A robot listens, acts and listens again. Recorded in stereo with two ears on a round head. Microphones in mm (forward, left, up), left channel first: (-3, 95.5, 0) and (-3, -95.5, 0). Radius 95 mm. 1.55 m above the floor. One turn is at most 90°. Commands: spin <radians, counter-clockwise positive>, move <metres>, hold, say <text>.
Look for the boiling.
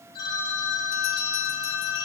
hold
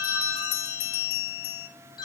hold
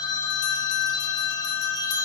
say I can't make out boiling to turn to.